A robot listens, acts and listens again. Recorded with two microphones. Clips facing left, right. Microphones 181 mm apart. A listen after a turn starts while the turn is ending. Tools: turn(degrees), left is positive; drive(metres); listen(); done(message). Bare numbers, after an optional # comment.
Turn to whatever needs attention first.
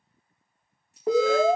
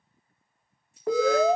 # The alarm: about 20° left or 160° left.
turn(20)
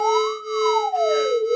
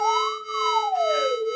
# So it is at 140° left.
turn(140)
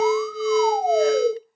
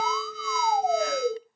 # The alarm is now 35° left.
turn(35)
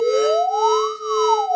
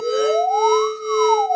# The alarm is now 10° right.
turn(-10)
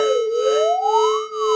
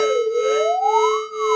done("Found it: an alarm, straight ahead.")